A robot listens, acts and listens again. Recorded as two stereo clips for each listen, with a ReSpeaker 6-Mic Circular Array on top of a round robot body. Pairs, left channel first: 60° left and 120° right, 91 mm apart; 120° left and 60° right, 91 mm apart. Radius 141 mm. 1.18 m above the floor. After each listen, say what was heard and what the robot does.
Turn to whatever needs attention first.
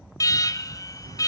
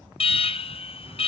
The alarm: 110° left. Turn 110° left.
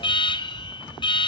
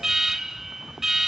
The alarm is now 25° left. Turn 25° left.
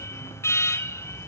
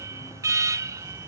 Facing the alarm, under 1 m away.